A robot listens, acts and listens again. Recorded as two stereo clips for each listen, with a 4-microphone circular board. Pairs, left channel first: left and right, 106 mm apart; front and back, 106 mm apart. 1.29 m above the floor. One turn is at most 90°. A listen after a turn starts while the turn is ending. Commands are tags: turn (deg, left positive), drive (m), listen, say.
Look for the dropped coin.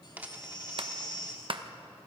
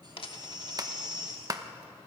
<turn deg="-15"/>
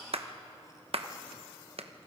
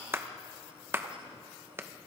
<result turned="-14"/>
<say>Facing where the dropped coin came from. I can't hear it now.</say>